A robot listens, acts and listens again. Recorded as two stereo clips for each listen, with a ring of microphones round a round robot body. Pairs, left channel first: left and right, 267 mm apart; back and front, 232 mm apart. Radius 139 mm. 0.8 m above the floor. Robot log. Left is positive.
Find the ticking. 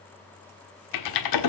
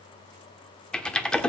cmd idle
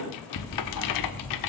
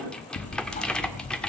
note: The ticking: 125° left.
cmd yaw +125
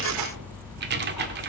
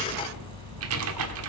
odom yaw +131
end: Found it: ticking, straight ahead.